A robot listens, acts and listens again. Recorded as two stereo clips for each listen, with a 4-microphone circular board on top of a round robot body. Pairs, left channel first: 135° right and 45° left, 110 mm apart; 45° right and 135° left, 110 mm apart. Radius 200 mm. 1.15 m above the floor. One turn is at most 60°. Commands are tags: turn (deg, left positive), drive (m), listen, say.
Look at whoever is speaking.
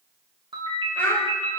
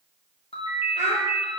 <turn deg="60"/>
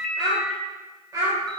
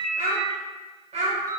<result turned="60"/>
<turn deg="60"/>
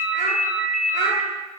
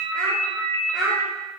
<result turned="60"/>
<turn deg="40"/>
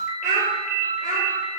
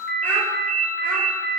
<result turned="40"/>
<listen/>
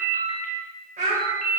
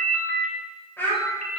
<turn deg="30"/>
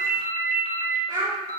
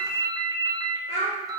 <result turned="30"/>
<turn deg="-10"/>
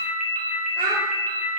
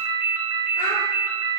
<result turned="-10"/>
<say>Facing the child speaking, 2 to 4 m away.</say>